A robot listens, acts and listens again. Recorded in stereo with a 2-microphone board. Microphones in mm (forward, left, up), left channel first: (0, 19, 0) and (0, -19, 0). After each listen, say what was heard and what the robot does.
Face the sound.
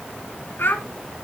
The child speaking: about 70° left or 110° left. Turn 70° left.
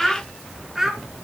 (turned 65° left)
So it is at 10° right. Turn 10° right.
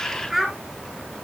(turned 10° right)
Found it: a child speaking, straight ahead, 2 to 4 m away.